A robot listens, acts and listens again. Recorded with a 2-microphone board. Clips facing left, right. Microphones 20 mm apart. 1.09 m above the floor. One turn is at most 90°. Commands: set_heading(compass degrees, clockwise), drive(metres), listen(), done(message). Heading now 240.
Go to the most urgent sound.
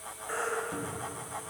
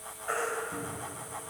set_heading(300)
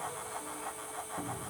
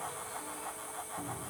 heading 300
listen()
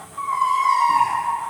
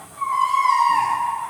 drive(1.0)
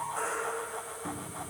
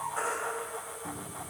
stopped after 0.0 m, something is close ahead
done("Blocked. The baby crying is further on, straight ahead.")